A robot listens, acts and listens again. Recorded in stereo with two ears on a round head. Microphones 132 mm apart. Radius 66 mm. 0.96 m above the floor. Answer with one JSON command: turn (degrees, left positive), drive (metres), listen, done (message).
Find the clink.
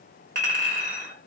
{"turn": -55}
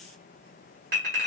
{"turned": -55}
{"turn": -65}
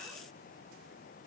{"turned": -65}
{"listen": true}
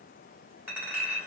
{"turn": -15}
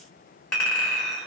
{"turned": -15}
{"done": "Facing the clink."}